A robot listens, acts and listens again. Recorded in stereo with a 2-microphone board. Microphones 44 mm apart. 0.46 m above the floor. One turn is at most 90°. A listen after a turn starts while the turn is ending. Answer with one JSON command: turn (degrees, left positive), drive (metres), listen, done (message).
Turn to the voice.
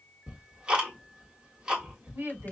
{"turn": -65}
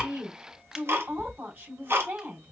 {"turn": -45}
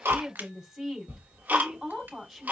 {"done": "Facing the woman speaking, 2 to 4 m away."}